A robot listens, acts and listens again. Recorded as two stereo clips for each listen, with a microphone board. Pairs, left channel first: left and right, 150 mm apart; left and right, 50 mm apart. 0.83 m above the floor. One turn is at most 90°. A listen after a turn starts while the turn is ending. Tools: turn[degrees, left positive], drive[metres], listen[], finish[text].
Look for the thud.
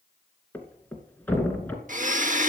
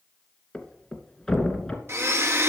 Action: turn[30]
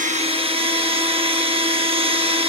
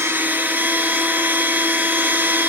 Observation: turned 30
Action: listen[]
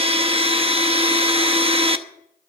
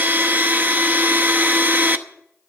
Action: finish[I heard a thud, but can't make it out now. It was about 20° right or 140° left.]